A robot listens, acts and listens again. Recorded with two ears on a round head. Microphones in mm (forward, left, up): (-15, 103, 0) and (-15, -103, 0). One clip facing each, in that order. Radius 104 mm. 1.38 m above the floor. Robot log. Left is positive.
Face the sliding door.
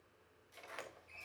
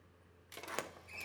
note: The sliding door: about 65° right or 115° right.
cmd yaw -65
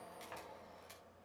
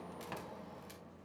note: So it is at 50° right.
cmd yaw -50
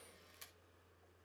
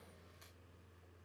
cmd idle
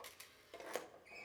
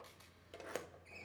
end: Facing the sliding door.